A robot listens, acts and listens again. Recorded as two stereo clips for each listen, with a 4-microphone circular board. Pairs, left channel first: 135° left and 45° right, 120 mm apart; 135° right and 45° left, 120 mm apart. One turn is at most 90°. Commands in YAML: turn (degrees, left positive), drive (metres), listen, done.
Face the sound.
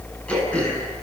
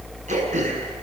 turn: 55
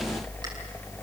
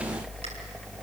listen: true
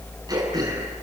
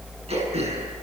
turn: 10
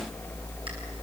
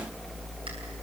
listen: true
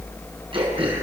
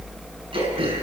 done: "Facing the throat clearing."